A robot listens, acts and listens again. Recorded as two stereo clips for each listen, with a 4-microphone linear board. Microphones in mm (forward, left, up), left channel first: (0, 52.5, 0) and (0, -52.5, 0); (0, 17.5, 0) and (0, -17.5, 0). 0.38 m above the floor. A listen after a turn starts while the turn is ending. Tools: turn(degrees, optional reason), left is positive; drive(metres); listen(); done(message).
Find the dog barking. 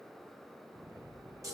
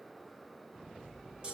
listen()
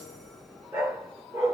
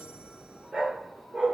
turn(degrees=-30, reason="The dog barking: about 30° right or 150° right.")
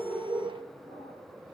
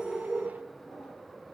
turn(degrees=-120, reason="So it is at 120° right.")
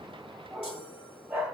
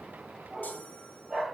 turn(degrees=-10, reason="The dog barking is now 10° right.")
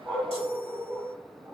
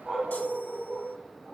done("Facing the dog barking, over 4 m away.")